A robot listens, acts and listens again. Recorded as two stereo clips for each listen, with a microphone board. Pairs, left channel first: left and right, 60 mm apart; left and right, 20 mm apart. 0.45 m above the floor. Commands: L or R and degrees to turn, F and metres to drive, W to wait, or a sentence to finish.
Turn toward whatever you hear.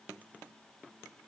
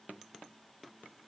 W
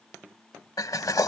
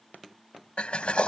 L90
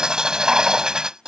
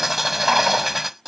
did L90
R10
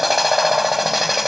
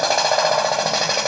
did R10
Found it: a drill, straight ahead.